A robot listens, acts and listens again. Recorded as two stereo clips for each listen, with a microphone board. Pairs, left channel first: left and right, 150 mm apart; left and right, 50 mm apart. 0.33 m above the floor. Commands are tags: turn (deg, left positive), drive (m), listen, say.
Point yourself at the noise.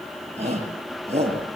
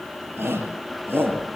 <turn deg="-45"/>
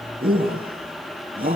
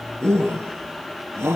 <turn deg="-85"/>
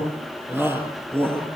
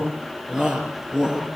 <turn deg="-15"/>
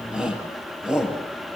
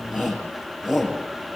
<say>Found it: a shout, straight ahead, over 4 m away.</say>